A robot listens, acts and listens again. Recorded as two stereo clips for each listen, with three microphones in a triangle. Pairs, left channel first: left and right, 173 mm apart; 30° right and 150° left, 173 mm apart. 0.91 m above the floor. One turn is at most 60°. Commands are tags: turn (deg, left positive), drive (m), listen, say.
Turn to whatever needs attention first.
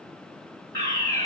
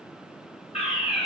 <turn deg="20"/>
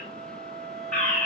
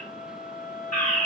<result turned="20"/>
<say>Facing the fire alarm, 2 to 4 m away.</say>